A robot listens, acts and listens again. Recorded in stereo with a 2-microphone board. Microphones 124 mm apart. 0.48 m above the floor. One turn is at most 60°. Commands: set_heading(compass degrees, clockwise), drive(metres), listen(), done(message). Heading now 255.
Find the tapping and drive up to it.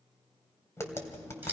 set_heading(235)
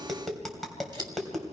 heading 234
drive(1.0)
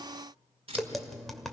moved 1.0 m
drive(1.0)
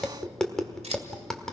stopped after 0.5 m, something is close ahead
done("I am next to the tapping.")